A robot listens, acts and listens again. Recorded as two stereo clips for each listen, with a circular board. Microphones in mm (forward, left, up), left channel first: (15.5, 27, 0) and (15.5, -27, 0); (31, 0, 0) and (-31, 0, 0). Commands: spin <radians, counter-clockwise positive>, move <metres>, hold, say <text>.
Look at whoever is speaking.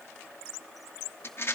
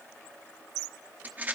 hold
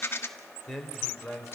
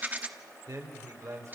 spin 3.14
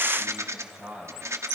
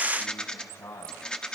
spin -0.26
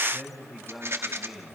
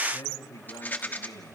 say Found it: a man speaking, straight ahead, over 4 m away.